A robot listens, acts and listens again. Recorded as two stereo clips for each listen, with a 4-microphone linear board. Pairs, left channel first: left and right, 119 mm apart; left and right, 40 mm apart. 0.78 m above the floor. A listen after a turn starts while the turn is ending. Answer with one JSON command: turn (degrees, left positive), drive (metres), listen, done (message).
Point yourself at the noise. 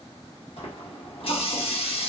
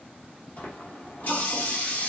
{"turn": 55}
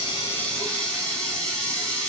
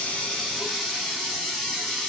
{"done": "Facing the running tap, 1 to 2 m away."}